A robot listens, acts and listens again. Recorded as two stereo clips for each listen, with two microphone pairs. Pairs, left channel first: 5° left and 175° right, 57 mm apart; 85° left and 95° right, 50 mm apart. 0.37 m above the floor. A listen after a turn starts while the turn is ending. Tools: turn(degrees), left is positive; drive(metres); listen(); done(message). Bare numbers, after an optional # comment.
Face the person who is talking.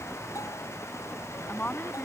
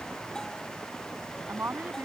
# The woman speaking: 55° right.
turn(-55)
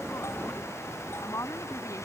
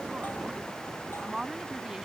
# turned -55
# The woman speaking is now 15° right.
turn(-15)
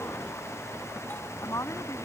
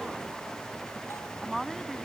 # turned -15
done("Found it: a woman speaking, straight ahead.")